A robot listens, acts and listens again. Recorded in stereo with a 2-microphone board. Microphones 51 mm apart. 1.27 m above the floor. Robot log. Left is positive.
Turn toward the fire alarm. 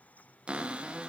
cmd idle
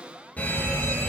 note: The fire alarm: about 30° left or 150° left.
cmd yaw +30
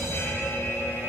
note: So it is at 120° left.
cmd yaw +120
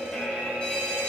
note: The fire alarm is now 25° left.
cmd yaw +25
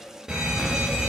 note: The fire alarm is now 10° right.
cmd yaw -10
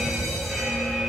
end: Found it: a fire alarm, straight ahead, 2 to 4 m away.